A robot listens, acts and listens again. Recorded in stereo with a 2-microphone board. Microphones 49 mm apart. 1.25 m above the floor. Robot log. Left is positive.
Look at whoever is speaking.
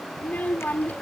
note: The child speaking: about 35° left or 145° left.
cmd yaw +35
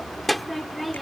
end: Found it: a child speaking, straight ahead.